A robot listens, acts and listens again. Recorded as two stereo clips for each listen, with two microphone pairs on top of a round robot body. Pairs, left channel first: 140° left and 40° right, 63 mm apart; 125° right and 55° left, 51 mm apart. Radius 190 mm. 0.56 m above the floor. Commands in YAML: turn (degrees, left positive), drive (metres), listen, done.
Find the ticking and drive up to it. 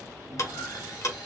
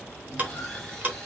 turn: 115
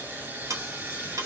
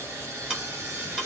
turn: -15
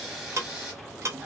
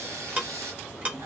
drive: 1.0
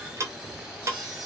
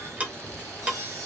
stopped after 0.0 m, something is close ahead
done: "Something is in my way. I am facing the ticking but have not reached it."